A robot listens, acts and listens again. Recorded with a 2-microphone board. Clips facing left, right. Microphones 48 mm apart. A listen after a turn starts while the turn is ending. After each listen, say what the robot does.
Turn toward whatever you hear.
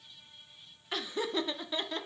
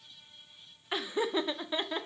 Turn 15° right.
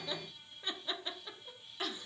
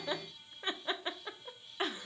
Turn 150° right.
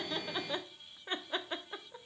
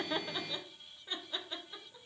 Turn 40° left.
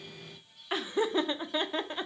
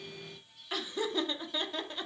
Turn 30° left.
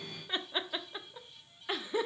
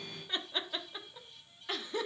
Turn 15° left.
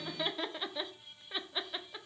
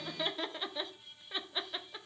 Found it: laughter, straight ahead, under 1 m away.